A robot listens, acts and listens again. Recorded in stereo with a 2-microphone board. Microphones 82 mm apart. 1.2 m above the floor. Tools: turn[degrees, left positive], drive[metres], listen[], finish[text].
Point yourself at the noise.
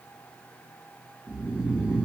Action: turn[-30]
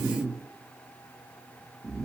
Thought: So it is at 140° right.
Action: turn[-140]
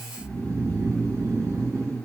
Thought: The snoring is now 40° right.
Action: turn[-40]
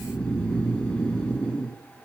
Thought: The snoring is now 10° left.
Action: turn[10]
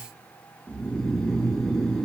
Action: finish[Facing the snoring.]